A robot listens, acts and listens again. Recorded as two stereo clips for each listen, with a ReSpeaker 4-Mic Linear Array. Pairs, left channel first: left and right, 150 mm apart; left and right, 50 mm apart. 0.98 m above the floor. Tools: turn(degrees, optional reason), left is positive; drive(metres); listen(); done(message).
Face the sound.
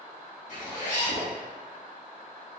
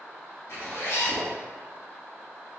turn(degrees=55, reason="The zipper: about 55° left or 125° left.")
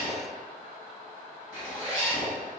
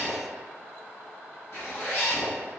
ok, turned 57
turn(degrees=65, reason="So it is at 65° left.")
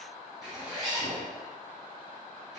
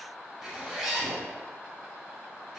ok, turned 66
done("Facing the zipper.")